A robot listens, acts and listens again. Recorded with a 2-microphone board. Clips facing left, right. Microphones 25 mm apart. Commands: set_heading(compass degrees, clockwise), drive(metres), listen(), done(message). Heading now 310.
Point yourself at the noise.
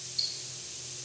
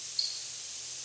set_heading(220)
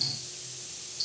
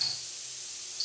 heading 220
done("Facing the ticking.")